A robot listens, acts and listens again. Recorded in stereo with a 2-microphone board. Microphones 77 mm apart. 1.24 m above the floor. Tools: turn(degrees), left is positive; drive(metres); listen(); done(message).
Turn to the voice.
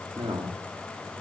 turn(degrees=-90)
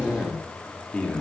turn(degrees=15)
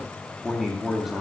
done("Facing the man speaking.")